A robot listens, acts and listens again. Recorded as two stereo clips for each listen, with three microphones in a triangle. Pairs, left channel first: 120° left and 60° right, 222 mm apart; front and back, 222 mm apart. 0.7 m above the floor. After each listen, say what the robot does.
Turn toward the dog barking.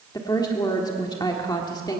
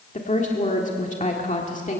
Keep listening.
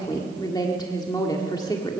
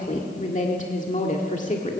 Keep listening.
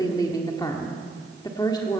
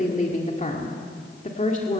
I can't make out a dog barking, only a woman speaking.